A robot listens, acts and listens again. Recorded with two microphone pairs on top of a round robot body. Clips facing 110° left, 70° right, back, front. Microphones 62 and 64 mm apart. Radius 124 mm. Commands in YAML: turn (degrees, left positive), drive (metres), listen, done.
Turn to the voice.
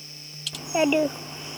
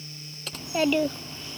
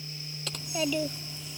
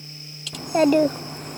turn: 40
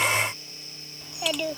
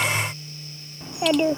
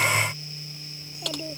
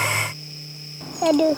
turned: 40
done: "Facing the child speaking."